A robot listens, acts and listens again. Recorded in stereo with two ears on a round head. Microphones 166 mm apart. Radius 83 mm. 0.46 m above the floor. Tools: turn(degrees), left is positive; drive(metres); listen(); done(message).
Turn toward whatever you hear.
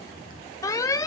turn(degrees=20)
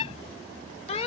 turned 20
turn(degrees=135)
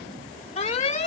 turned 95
turn(degrees=45)
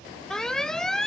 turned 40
done("Facing the alarm.")